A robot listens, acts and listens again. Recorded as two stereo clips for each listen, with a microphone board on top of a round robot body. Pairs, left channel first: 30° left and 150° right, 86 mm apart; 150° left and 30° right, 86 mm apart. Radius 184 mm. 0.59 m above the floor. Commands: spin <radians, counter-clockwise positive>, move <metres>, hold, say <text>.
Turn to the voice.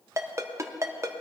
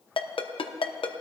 hold
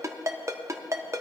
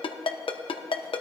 hold
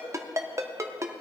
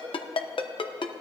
say I can't make out anyone speaking, only a ringtone.